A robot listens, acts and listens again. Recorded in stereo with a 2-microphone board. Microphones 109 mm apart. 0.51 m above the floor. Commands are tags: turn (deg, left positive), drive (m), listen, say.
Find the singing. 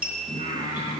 <turn deg="90"/>
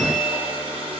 <listen/>
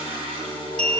<turn deg="-15"/>
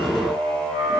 <say>Facing the singing.</say>